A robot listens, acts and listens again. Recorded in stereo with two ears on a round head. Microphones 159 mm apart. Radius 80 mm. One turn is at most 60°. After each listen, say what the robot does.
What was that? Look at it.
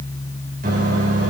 Turn 50° right.
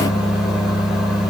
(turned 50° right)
Found it: a microwave, straight ahead.